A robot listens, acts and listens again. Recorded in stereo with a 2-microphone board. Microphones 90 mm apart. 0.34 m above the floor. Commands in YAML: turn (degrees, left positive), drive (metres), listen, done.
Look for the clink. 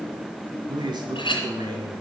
turn: 65
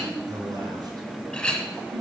turn: 10
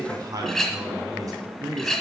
done: "Found it: a clink, straight ahead."